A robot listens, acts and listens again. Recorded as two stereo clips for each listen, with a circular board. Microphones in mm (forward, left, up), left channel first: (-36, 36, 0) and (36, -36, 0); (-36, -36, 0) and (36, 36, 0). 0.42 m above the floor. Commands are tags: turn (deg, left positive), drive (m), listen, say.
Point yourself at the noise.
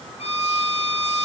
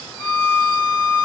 <turn deg="150"/>
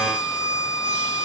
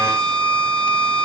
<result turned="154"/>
<say>Found it: a violin, straight ahead.</say>